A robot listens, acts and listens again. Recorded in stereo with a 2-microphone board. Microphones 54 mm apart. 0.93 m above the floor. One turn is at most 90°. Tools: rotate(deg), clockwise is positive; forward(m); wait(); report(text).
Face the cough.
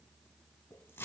wait()
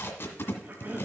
rotate(40)
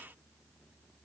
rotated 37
wait()
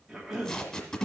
report("Facing the cough.")